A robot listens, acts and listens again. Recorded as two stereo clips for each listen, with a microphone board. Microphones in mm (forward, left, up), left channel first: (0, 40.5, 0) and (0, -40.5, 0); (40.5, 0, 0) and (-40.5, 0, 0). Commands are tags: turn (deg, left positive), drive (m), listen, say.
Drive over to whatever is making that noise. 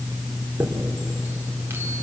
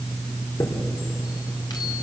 <turn deg="-30"/>
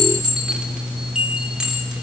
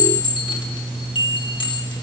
<turn deg="-10"/>
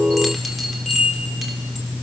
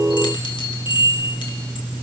<drive m="1.0"/>
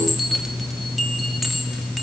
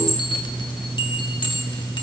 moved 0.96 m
<drive m="1.0"/>
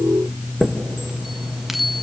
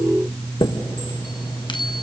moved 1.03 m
<drive m="1.0"/>
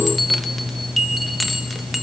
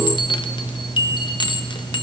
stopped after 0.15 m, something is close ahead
<say>Arrived at the chime, straight ahead.</say>